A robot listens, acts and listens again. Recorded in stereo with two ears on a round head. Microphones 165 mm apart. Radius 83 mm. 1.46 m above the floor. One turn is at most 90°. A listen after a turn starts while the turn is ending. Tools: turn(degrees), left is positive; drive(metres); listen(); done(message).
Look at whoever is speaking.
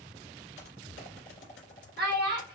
turn(degrees=-60)
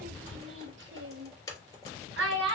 turn(degrees=-75)
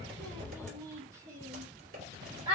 turn(degrees=-30)
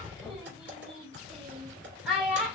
done("Facing the child speaking.")